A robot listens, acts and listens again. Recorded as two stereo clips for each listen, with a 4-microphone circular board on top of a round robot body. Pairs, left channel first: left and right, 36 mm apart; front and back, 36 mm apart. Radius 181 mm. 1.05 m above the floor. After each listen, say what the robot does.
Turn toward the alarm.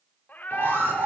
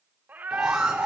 Turn 95° right.
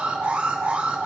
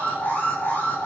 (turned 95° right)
Turn 35° right.
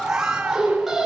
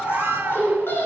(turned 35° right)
Turn 10° right.
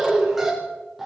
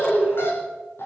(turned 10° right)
Facing the alarm.